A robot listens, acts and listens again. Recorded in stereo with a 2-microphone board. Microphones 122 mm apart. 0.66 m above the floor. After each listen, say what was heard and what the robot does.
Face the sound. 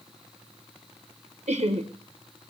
The laughter: about 55° right or 125° right. Turn 55° right.
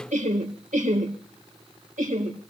So it is at 75° right. Turn 75° right.
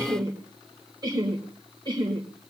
The laughter is now 35° right. Turn 35° right.
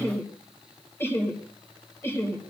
The laughter is now 15° left. Turn 15° left.
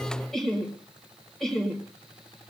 Found it: laughter, straight ahead.